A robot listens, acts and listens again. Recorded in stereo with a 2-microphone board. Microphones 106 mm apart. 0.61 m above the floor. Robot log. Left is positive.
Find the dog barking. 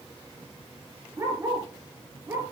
note: The dog barking: about 25° right or 155° right.
cmd yaw -25
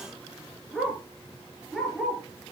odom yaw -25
end: Facing the dog barking, over 4 m away.